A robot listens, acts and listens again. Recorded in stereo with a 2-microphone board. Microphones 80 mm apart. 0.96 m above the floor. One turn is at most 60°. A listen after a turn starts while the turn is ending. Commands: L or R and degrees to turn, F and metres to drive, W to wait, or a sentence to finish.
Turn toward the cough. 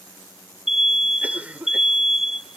R20
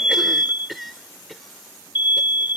Facing the cough.